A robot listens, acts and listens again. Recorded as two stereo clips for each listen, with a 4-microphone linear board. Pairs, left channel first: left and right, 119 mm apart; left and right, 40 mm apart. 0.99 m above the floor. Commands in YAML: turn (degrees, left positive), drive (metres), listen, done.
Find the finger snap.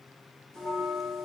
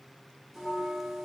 listen: true
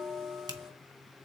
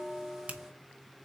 turn: -35
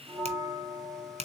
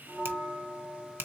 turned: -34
turn: -105
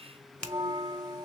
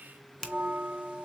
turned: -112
done: "Facing the finger snap."